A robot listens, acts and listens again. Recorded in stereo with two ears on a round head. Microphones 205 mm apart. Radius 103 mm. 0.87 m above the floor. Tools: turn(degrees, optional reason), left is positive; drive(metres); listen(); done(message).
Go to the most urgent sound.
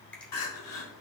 turn(degrees=70, reason="The crying: about 70° left or 110° left.")
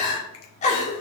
turn(degrees=35, reason="So it is at 35° left.")
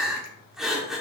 drive(metres=1.0)
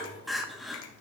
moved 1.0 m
drive(metres=1.0)
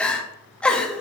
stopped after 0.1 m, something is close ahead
done("Arrived at the crying, straight ahead.")